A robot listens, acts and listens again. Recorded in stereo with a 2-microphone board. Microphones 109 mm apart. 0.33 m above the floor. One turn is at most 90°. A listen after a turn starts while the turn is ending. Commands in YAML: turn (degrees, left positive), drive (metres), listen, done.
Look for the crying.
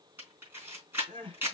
turn: -50
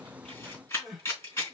done: "Facing the crying, 2 to 4 m away."